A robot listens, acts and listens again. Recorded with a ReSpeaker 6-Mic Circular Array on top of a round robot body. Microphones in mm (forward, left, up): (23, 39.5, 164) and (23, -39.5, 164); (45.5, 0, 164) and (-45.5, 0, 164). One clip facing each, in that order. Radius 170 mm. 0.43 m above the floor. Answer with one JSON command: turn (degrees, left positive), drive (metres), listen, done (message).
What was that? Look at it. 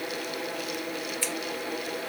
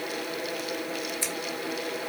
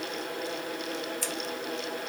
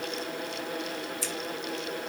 {"turn": -20}
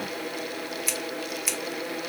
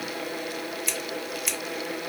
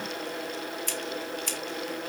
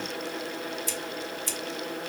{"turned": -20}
{"done": "Facing the scissors, 1 to 2 m away."}